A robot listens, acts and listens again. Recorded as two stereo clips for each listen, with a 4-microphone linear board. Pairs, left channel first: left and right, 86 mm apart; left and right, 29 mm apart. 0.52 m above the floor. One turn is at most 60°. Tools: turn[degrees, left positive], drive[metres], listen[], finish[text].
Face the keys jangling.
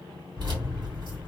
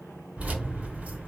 Thought: The keys jangling: about 65° right or 115° right.
Action: turn[-60]
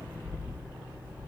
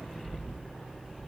Thought: So it is at 20° right.
Action: turn[-20]
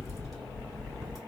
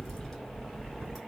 Action: finish[Found it: keys jangling, straight ahead.]